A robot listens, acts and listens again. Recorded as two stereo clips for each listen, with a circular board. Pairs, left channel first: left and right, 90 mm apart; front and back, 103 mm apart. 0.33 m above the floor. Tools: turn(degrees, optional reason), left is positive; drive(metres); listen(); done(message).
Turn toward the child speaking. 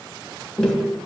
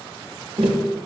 listen()
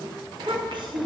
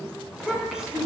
turn(degrees=-100, reason="The child speaking: 100° right.")
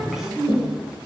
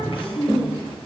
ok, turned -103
turn(degrees=-10, reason="The child speaking is now 10° right.")
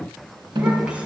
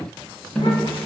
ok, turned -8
listen()
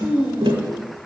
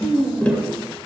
turn(degrees=-20, reason="The child speaking is now 20° right.")
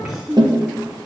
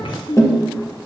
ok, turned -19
turn(degrees=-10, reason="The child speaking is now 10° right.")
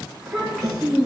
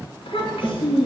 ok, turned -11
done("Facing the child speaking, 2 to 4 m away.")